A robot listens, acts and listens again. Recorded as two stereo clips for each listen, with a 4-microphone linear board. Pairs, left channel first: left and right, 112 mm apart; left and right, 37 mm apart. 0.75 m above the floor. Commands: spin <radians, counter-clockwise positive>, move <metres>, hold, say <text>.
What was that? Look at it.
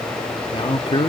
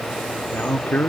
spin 0.87
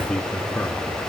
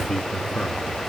spin 0.17
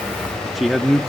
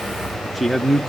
say Found it: a man speaking, straight ahead, 1 to 2 m away.